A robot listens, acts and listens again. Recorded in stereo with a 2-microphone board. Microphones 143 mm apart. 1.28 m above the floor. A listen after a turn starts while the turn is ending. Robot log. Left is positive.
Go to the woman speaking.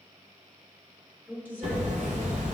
cmd yaw -30
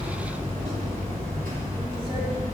cmd idle
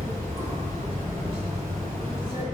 cmd idle
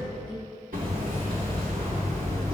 end: I heard a woman speaking, but can't make it out now. It was about 20° left or 140° right. I did not reach it.